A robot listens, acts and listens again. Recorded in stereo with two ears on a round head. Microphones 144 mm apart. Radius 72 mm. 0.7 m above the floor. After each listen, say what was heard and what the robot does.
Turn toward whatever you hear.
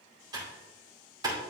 The typing on a keyboard: about 25° right or 155° right. Turn 25° right.
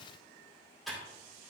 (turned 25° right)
Facing the typing on a keyboard.